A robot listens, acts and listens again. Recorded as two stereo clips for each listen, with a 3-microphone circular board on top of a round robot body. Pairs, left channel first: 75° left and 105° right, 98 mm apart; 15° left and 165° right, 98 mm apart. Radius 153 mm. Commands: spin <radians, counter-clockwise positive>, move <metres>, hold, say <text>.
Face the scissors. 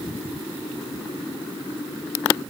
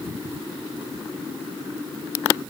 hold
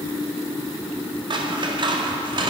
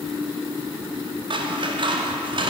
spin -2.44
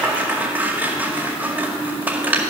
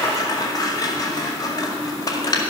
spin -0.61
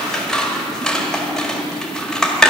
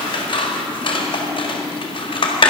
spin -0.17
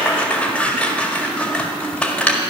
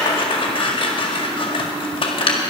say Found it: scissors, straight ahead.